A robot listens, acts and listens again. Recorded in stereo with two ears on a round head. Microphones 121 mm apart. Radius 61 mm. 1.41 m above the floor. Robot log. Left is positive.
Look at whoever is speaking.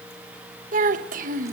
note: The child speaking: about 65° right or 115° right.
cmd yaw -65
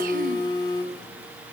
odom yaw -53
cmd idle
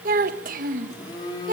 note: So it is at 60° right.
cmd yaw -60
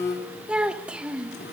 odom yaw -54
end: Facing the child speaking, 1 to 2 m away.